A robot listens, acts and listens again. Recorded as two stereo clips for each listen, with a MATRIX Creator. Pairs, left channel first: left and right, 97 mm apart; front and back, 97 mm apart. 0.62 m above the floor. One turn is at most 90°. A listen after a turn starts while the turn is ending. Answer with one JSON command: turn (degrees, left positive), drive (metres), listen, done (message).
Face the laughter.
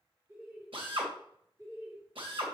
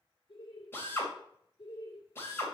{"turn": -35}
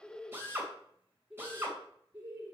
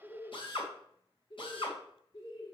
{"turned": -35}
{"turn": -25}
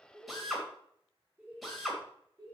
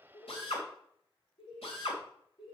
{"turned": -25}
{"turn": -30}
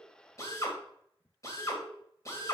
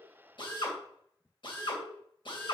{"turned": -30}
{"done": "Found it: laughter, straight ahead."}